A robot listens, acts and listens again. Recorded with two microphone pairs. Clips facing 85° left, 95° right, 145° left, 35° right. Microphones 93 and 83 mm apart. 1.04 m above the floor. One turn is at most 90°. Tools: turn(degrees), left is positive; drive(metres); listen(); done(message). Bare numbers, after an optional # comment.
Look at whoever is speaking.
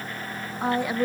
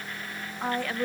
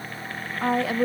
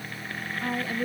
# The woman speaking: 160° left.
turn(90)
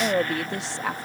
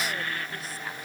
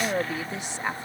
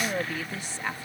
# The woman speaking is now 75° left.
turn(75)
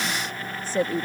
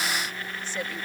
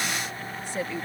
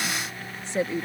# The woman speaking is now 30° left.
turn(30)
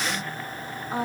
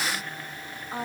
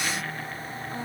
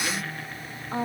# The woman speaking is now 15° left.
turn(15)
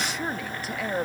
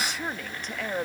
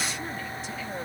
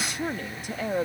done("Facing the woman speaking.")